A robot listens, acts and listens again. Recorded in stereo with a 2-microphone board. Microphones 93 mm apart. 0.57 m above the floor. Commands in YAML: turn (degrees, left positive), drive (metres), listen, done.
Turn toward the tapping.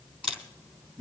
listen: true
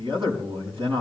listen: true
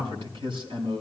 done: "I can't make out tapping, only a camera shutter and a man speaking."